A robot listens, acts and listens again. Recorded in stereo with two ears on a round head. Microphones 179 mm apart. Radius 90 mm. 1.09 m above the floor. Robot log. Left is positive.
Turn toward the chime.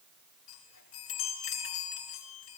cmd yaw +90
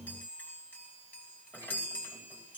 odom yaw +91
note: So it is at 10° left.
cmd yaw +10
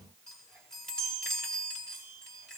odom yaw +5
end: Found it: a chime, straight ahead.